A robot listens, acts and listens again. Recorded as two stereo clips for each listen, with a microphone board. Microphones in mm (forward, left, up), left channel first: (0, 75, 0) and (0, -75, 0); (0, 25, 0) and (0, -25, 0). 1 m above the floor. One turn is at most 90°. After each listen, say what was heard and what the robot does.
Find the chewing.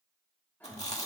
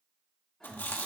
The chewing: about 50° left or 130° left. Turn 50° left.
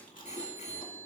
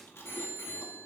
So it is at 75° left. Turn 75° left.
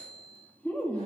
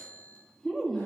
The chewing is now 10° left. Turn 10° left.
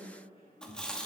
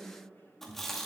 Facing the chewing.